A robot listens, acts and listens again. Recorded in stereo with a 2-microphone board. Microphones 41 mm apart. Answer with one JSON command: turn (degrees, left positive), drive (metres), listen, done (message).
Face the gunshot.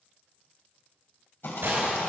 {"turn": -90}
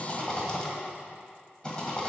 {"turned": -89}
{"done": "Facing where the gunshot came from. I can't hear it now."}